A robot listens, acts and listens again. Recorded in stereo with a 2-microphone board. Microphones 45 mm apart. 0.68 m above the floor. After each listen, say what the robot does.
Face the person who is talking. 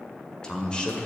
Turn 20° left.
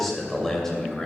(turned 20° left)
Turn 30° left.
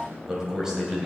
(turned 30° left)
Turn 15° right.
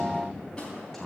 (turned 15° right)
Facing the man speaking.